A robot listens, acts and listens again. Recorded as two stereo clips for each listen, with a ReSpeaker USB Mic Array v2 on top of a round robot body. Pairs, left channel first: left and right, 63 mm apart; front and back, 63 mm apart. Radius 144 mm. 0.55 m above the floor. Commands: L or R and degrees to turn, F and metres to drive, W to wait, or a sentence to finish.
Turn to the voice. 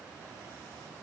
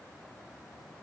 W
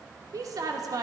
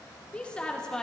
R80
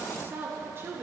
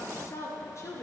R40
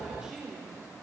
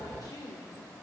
R15
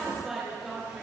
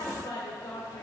R10
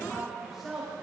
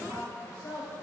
Facing the woman speaking.